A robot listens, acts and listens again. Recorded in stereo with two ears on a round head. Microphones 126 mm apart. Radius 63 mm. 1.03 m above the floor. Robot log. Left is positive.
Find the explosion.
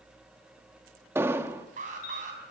note: The explosion: about 15° right or 165° right.
cmd yaw -15
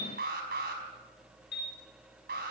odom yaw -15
cmd idle
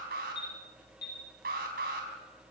end: I heard an explosion, but can't make it out now. It was about straight ahead or 150° right.